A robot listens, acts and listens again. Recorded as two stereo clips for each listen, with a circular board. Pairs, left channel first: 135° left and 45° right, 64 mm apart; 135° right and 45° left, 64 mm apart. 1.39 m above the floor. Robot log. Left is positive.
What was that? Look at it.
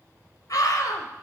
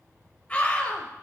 note: The scream: 155° left.
cmd yaw +155
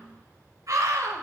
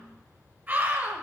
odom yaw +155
note: The scream is now 20° right.
cmd yaw -20
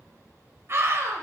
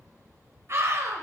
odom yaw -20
end: Facing the scream.